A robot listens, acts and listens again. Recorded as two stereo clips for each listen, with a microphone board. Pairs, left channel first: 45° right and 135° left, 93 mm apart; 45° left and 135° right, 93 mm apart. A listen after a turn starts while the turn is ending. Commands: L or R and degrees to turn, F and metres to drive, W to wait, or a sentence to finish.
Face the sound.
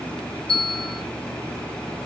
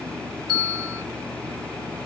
R45
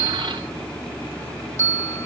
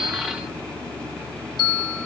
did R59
L15
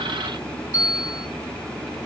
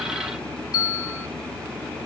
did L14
Facing the bell.